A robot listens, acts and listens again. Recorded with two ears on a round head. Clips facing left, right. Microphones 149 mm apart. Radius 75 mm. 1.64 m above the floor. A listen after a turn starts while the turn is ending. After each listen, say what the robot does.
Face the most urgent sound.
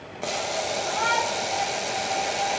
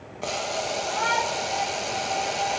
Turn 30° left.
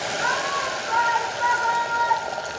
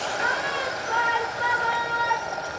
Turn 30° right.
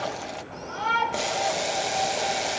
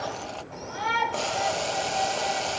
Found it: a shout, straight ahead.